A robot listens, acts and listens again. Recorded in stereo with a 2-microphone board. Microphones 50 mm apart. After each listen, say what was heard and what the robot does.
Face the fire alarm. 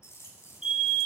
Turn 30° right.
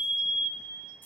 So it is at 135° right. Turn 135° right.
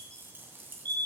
The fire alarm is now 40° left. Turn 40° left.
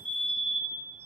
Found it: a fire alarm, straight ahead, 2 to 4 m away.